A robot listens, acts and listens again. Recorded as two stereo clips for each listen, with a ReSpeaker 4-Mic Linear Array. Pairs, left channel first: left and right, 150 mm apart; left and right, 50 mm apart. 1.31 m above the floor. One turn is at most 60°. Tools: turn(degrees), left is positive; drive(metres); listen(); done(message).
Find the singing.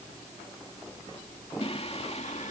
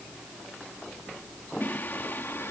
turn(degrees=50)
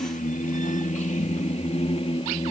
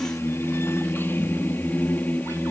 turn(degrees=40)
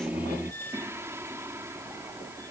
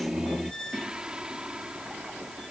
turn(degrees=-20)
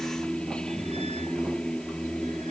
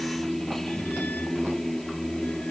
done("Found it: singing, straight ahead.")